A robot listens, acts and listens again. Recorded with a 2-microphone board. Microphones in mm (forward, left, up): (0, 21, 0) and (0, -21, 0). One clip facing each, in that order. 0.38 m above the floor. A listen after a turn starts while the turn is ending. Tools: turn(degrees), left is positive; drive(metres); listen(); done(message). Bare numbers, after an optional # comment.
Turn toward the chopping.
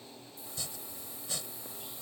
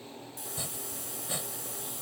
# The chopping: about 20° right or 160° right.
turn(-20)
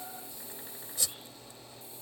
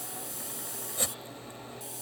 # So it is at 135° right.
turn(-135)
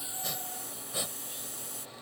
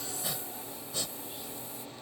# The chopping is now 15° left.
turn(15)
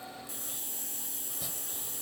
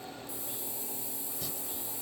listen()
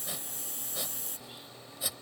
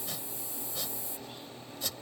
# The chopping is now 10° left.
turn(10)
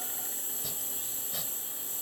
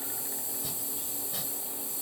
done("Found it: chopping, straight ahead.")